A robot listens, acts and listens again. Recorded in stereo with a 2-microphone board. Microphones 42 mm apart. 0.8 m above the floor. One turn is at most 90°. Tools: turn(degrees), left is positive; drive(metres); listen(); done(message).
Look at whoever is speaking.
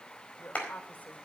turn(degrees=45)
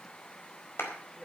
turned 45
done("Found it: a woman speaking, straight ahead.")